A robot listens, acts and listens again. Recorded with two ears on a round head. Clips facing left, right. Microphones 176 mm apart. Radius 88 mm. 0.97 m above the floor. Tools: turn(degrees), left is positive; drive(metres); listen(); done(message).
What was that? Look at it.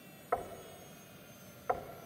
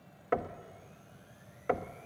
turn(degrees=-35)
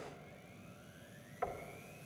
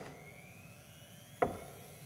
turn(degrees=-105)
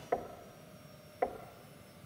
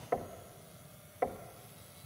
done("Facing the knocking.")